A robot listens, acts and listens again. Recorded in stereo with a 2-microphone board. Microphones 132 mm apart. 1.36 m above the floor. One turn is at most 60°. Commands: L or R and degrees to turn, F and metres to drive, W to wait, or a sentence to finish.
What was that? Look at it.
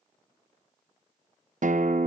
R60
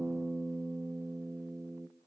R15
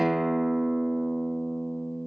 Facing the guitar.